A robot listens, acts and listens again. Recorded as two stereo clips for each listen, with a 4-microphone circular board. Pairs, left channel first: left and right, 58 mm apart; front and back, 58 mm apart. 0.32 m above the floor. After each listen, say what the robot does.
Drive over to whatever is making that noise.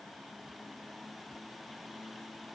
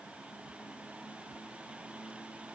Keep listening.
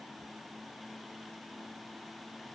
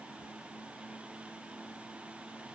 Keep listening.
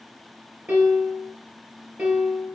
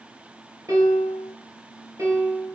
Turn 150° right.
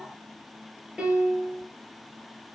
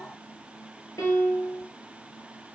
Turn 10° right.
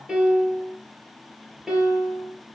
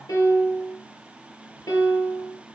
Drive 1.0 m forward.
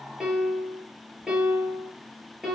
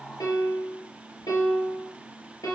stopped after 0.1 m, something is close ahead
Something is in my way. I am facing the piano but have not reached it.